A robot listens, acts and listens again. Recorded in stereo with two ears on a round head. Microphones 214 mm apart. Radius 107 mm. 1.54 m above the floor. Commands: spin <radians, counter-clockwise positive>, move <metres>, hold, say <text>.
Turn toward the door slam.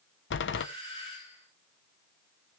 spin 0.87
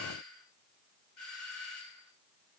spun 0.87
hold
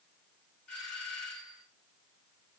say I heard a door slam, but can't make it out now. It was about straight ahead or 80° left.